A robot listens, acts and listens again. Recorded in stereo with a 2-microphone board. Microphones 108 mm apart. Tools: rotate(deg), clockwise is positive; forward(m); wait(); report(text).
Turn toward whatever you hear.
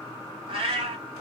rotate(50)
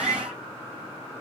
rotate(80)
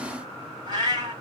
rotate(40)
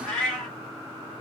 report("Facing the cat meowing.")